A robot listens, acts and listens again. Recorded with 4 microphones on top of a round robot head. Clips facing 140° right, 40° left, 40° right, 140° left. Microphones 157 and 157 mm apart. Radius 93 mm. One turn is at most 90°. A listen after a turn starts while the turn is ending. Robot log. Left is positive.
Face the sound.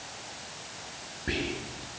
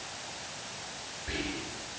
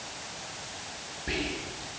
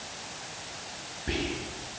note: The whispering: 120° right.
cmd yaw -90
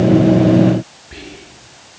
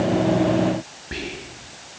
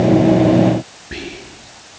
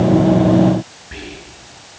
end: Facing the whispering.